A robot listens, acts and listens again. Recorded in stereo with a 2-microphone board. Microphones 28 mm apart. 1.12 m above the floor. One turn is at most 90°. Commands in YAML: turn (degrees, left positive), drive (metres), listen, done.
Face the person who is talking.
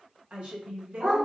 turn: -45
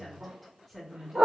done: "Found it: a woman speaking, straight ahead, 1 to 2 m away."